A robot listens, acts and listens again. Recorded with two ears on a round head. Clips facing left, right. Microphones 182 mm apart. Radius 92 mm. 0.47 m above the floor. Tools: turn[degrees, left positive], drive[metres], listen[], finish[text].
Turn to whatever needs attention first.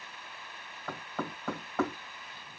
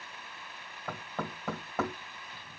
Action: listen[]
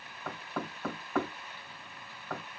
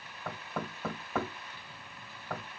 Action: listen[]
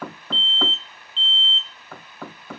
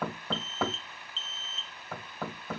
Thought: The alarm: about 35° right or 145° right.
Action: turn[-35]
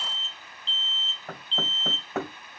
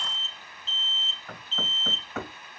Action: finish[Found it: an alarm, straight ahead, 1 to 2 m away.]